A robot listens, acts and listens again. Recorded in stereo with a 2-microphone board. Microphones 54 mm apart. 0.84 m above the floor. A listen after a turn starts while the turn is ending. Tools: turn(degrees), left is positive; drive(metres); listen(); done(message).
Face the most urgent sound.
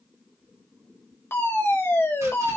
turn(degrees=55)
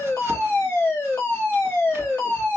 turn(degrees=50)
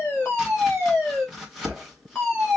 turn(degrees=10)
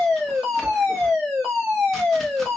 done("Found it: a fire alarm, straight ahead.")